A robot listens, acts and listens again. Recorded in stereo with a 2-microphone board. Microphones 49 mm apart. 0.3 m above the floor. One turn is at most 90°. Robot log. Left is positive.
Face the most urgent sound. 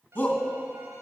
note: The shout: about 40° left or 140° left.
cmd yaw +40
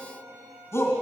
note: So it is at 95° left.
cmd yaw +90
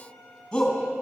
note: The shout is now 20° left.
cmd yaw +20
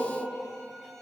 cmd idle
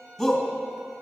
end: Found it: a shout, straight ahead, 2 to 4 m away.